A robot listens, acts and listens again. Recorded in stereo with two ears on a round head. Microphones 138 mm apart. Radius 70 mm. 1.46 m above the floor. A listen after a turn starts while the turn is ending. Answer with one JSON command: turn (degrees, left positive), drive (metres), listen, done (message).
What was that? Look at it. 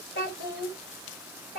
{"turn": 60}
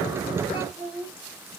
{"turn": -10}
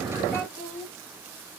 {"done": "Facing the child speaking."}